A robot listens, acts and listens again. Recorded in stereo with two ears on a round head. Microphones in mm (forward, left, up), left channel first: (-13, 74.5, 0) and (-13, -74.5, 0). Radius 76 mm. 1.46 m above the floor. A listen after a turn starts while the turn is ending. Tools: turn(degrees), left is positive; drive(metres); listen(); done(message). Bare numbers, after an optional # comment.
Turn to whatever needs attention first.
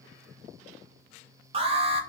# The alarm: about 35° right or 145° right.
turn(-35)
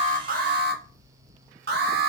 # So it is at 105° right.
turn(-105)
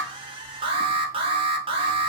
# The alarm is now 35° right.
turn(-35)
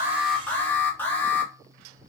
# The alarm is now 10° left.
turn(10)
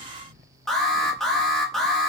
done("Facing the alarm, under 1 m away.")